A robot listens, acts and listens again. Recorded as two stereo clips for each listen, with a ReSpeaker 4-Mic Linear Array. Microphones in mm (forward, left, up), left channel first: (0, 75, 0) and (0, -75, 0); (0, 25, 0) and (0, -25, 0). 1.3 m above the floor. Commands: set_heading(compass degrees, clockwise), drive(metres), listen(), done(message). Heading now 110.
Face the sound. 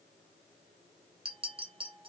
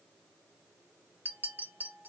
set_heading(145)
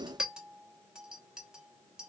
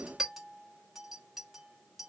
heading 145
done("Facing the clink.")